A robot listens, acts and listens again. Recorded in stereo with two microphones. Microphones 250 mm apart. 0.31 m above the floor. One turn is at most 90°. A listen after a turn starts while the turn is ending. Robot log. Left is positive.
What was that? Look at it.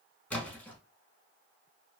cmd yaw +30
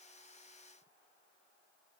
cmd idle
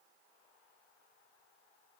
end: I heard a splash, but can't make it out now. It was about 25° right or 145° left.